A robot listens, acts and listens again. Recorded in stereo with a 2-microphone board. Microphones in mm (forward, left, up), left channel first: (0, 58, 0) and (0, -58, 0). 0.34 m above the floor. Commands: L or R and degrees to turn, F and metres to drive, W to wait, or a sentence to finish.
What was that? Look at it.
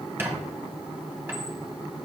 R20
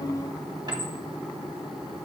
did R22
R135
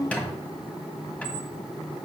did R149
L15
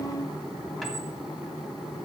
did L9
W
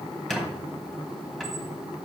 Found it: a squeak, straight ahead.